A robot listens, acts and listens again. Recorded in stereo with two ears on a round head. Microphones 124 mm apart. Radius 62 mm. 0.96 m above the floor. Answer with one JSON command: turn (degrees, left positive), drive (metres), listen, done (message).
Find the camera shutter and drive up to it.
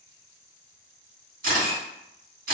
{"turn": -65}
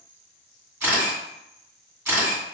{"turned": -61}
{"turn": -20}
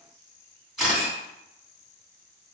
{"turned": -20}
{"drive": 1.0}
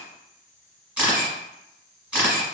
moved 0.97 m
{"turn": -10}
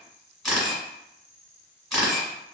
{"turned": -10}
{"drive": 1.0}
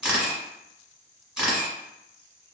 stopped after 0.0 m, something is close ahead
{"done": "I am next to the camera shutter."}